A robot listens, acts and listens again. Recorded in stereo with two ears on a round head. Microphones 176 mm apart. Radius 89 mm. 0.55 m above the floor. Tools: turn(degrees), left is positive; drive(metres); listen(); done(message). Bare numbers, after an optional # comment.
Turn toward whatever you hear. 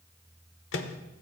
# The microwave: about 65° left or 115° left.
turn(65)
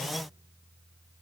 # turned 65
listen()
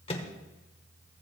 # So it is at 30° left.
turn(30)
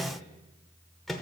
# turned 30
done("Facing the microwave.")